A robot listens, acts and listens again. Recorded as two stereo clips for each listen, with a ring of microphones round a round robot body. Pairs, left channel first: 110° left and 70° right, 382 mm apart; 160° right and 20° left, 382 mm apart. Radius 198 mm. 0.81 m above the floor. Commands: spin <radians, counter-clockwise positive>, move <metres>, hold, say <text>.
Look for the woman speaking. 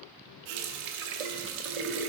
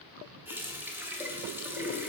hold
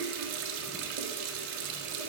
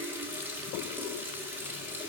hold
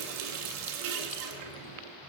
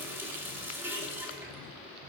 say I can't make out a woman speaking to turn to.